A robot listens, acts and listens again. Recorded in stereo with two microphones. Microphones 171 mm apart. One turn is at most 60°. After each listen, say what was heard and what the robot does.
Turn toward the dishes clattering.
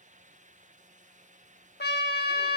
Keep listening.
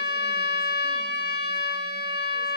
Keep listening.
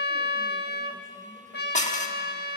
The dishes clattering: about 45° left or 135° left. Turn 45° left.
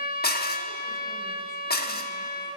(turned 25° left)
So it is at 110° left. Turn 60° left.
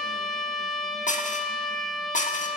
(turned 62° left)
The dishes clattering is now 50° left. Turn 50° left.
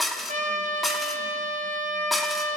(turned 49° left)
Found it: dishes clattering, straight ahead.